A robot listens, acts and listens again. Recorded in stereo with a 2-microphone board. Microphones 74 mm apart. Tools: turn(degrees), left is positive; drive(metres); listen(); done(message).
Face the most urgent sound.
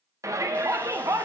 turn(degrees=-45)
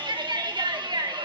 turn(degrees=-85)
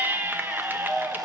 turn(degrees=-25)
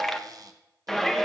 done("Found it: a shout, straight ahead, 1 to 2 m away.")